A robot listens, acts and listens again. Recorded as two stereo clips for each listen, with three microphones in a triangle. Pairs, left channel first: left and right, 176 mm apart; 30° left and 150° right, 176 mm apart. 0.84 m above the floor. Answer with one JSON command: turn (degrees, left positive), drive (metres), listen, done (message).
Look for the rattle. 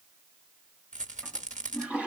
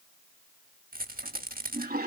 {"turn": -130}
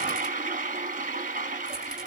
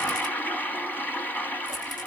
{"listen": true}
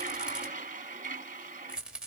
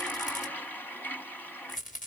{"done": "Facing the rattle."}